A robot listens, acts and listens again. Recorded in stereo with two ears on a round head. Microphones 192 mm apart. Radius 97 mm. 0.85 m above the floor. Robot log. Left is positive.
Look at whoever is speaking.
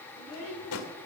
cmd yaw -90
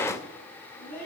note: So it is at 10° left.
cmd yaw +10
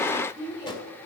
end: Facing the child speaking, over 4 m away.